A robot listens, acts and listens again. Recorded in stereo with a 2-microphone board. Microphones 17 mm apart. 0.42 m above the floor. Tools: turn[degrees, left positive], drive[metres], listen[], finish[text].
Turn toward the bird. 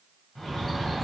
Thought: The bird: about 30° left or 150° left.
Action: turn[30]
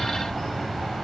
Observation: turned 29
Thought: So it is at 120° left.
Action: turn[120]
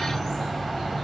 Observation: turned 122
Action: finish[Facing the bird.]